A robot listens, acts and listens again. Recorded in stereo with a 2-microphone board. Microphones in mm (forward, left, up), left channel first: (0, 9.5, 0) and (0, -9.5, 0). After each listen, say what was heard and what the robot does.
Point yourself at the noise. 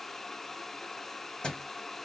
The thud: about 50° left or 130° left. Turn 50° left.
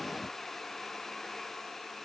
Keep listening.
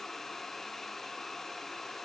I heard a thud, but can't make it out now. It was about straight ahead or 80° left.